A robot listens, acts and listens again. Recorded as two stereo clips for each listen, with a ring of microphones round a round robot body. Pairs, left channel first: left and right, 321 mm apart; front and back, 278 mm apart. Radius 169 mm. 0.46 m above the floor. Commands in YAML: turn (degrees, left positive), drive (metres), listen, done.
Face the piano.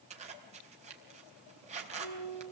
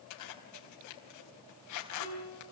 turn: 150
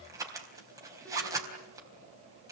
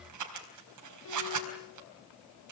listen: true
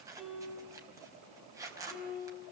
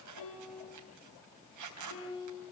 done: "Found it: a piano, straight ahead, over 4 m away."